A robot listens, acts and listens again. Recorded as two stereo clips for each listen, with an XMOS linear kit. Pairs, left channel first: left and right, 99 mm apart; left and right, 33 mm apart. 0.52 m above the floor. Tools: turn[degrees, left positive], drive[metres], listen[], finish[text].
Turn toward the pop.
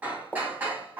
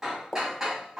Action: turn[30]
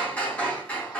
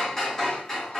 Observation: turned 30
Action: listen[]
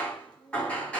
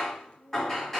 Action: finish[I heard a pop, but can't make it out now. It was about 20° right or 140° left.]